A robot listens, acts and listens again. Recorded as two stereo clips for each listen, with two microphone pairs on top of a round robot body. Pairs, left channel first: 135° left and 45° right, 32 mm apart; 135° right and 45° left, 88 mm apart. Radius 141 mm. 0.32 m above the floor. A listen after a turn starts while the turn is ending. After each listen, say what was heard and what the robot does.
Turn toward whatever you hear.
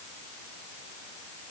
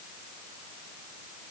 Keep listening.
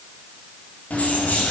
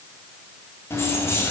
The keys jangling: 160° left. Turn 160° left.
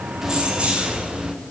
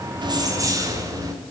The keys jangling is now 15° left. Turn 15° left.
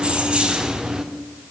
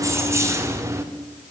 The keys jangling is now 25° left. Turn 25° left.
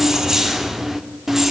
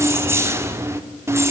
The keys jangling is now 40° left. Turn 40° left.
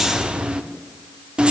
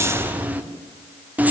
Found it: keys jangling, straight ahead, 1 to 2 m away.